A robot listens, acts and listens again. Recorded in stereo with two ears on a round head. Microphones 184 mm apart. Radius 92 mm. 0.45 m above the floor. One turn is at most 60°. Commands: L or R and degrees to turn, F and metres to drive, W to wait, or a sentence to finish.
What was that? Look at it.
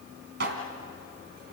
R55
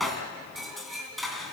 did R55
Found it: dishes clattering, straight ahead, 2 to 4 m away.